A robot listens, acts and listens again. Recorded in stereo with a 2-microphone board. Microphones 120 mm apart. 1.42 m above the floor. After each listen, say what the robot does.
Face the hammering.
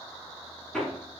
Turn 30° left.
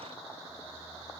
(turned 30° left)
Keep listening.
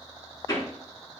Turn 150° left.
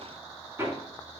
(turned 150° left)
Turn 20° right.
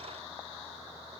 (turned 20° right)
Keep listening.
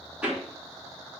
Turn 10° right.
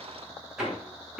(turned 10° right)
Found it: hammering, straight ahead.